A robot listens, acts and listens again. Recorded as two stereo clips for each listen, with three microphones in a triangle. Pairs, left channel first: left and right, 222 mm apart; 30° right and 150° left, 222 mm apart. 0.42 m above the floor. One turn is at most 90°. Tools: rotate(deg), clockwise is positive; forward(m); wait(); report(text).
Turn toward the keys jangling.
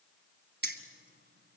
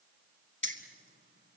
rotate(55)
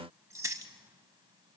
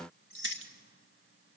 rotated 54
rotate(15)
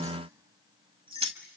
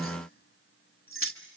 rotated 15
rotate(30)
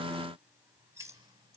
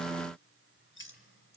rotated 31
rotate(15)
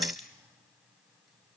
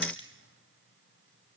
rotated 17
report("Found it: keys jangling, straight ahead.")